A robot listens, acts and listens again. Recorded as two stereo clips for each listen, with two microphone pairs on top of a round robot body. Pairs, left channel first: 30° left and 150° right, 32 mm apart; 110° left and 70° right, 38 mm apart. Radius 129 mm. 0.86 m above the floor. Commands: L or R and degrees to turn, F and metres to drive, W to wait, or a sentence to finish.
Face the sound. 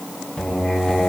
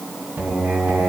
R20
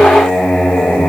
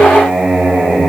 Facing the singing, over 4 m away.